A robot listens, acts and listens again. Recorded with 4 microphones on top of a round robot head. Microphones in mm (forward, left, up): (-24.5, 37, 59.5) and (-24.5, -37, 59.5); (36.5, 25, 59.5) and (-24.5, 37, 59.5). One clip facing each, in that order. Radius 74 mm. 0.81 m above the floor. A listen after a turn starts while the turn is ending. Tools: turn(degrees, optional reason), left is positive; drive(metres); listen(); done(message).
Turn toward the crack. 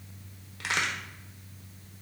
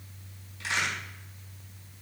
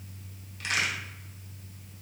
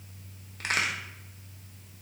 turn(degrees=120, reason="The crack: 120° left.")
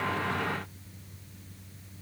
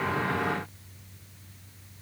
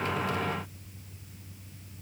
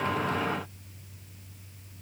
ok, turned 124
done("Facing where the crack came from. I can't hear it now.")